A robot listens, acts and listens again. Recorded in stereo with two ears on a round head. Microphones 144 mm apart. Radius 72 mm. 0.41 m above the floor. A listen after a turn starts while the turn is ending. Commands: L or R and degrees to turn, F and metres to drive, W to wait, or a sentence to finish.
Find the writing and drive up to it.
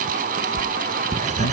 R50
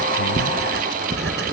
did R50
R80
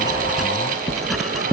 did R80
F1.0
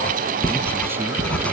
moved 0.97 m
L10
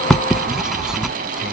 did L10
F1.0
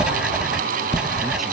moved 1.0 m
F1.0
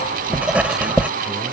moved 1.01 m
R10
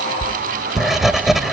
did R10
F1.0
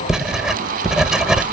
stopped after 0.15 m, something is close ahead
Arrived at the writing, straight ahead.